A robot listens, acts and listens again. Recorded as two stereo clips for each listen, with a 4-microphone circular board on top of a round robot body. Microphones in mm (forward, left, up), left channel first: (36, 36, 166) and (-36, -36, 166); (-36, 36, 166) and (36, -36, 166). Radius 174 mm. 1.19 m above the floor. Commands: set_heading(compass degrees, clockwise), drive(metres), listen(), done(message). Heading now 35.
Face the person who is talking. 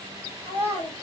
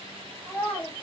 set_heading(335)
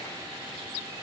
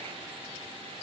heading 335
listen()
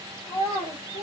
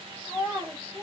set_heading(295)
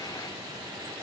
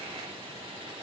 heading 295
listen()
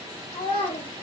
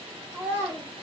set_heading(260)
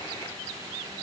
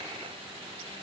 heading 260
listen()
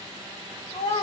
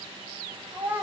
set_heading(245)
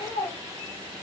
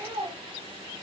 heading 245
done("Facing the child speaking.")